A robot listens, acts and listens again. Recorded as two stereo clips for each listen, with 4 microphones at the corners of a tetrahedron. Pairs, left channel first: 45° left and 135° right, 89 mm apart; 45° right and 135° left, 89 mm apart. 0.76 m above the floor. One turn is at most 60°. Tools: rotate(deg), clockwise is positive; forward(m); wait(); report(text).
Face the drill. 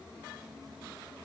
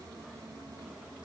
wait()
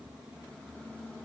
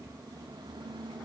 wait()
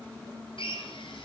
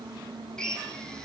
rotate(-35)
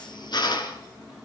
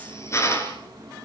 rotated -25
rotate(-10)
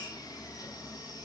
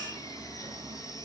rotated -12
wait()
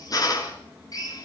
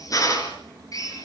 report("Found it: a drill, straight ahead.")